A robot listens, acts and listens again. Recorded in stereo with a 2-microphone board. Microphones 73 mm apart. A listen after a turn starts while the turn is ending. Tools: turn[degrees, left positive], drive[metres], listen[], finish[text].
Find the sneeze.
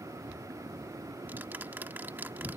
Action: listen[]
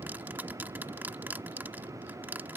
Action: listen[]
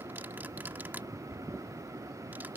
Action: finish[I can't make out a sneeze to turn to.]